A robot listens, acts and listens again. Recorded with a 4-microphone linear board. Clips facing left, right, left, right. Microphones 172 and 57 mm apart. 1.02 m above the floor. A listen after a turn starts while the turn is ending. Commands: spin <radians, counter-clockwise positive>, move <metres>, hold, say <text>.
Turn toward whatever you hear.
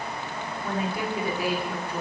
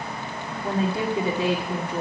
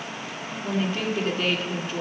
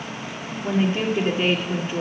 spin -0.35
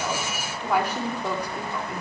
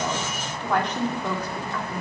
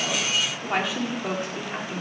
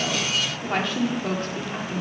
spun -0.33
spin 0.26
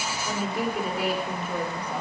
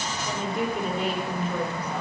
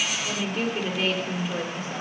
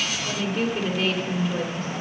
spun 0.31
spin 0.17
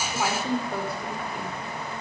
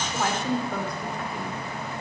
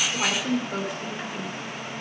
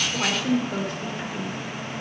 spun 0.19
say Facing the woman speaking, 2 to 4 m away.